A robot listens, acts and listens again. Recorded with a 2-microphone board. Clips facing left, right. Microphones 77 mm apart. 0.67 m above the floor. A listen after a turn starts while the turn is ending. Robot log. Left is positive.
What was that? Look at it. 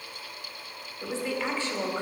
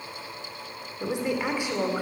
cmd yaw -30
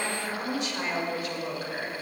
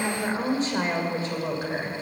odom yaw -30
note: So it is at 150° right.
cmd yaw -150
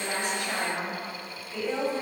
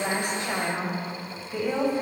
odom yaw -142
note: The woman speaking is now 20° right.
cmd yaw -20
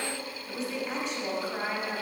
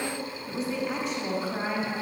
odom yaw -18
end: Found it: a woman speaking, straight ahead.